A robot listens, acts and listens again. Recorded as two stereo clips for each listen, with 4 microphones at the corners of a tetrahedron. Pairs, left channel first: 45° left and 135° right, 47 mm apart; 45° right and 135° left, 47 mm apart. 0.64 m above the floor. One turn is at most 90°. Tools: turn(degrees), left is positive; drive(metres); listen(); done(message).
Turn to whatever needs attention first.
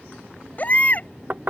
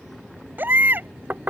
turn(degrees=90)
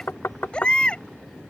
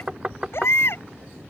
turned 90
turn(degrees=-20)
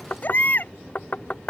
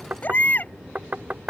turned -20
done("Found it: a baby crying, straight ahead.")